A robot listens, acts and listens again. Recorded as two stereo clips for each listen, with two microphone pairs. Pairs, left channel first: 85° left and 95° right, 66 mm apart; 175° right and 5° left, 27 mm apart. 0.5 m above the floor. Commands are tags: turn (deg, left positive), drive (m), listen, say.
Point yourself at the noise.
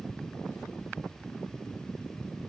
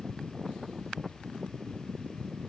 <listen/>
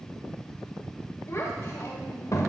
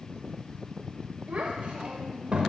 <turn deg="50"/>
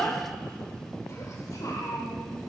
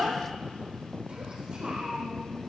<turn deg="65"/>
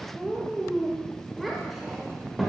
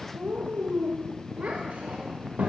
<turn deg="-10"/>
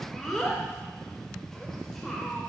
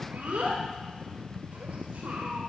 <say>Found it: a child speaking, straight ahead.</say>